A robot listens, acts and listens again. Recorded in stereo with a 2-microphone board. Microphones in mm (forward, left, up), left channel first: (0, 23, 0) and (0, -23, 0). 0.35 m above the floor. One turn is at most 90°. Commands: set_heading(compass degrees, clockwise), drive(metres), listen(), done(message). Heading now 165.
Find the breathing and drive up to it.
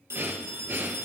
set_heading(220)
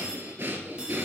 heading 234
set_heading(289)
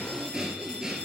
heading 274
set_heading(289)
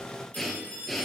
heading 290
drive(1.0)
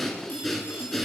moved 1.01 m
drive(1.0)
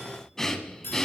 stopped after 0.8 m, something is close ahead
set_heading(280)
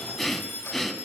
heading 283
done("I am next to the breathing.")